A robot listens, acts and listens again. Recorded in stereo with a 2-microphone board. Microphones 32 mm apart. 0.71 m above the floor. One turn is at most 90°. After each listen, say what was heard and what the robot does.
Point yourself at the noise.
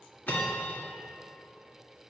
Turn 90° left.
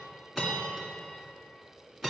Facing the bell.